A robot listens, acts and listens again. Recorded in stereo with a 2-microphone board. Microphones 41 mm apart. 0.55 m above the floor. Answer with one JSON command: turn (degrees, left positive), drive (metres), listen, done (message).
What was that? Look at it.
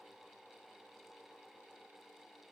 {"listen": true}
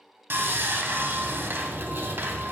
{"turn": -60}
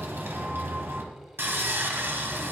{"turn": -60}
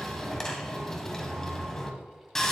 {"turn": 10}
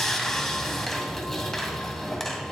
{"done": "Found it: sawing, straight ahead, 1 to 2 m away."}